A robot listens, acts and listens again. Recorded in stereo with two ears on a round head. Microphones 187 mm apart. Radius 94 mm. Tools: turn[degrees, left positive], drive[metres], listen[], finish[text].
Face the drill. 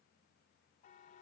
Action: listen[]
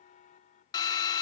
Thought: The drill: about 20° left or 160° left.
Action: turn[20]
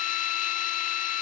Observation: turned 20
Thought: So it is at 140° left.
Action: turn[140]
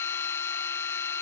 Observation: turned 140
Thought: The drill is now 15° left.
Action: turn[15]
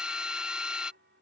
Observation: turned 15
Action: finish[Found it: a drill, straight ahead.]